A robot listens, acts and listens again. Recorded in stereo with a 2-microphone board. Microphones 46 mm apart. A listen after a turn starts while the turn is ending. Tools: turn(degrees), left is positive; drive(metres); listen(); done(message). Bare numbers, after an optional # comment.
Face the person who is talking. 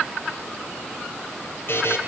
listen()
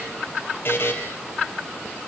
listen()
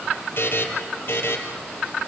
done("I can't make out anyone speaking, only a buzzer.")